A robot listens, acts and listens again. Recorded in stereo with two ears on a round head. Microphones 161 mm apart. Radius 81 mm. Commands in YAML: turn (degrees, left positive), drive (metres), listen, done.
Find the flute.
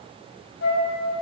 turn: 75
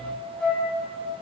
done: "Found it: a flute, straight ahead, over 4 m away."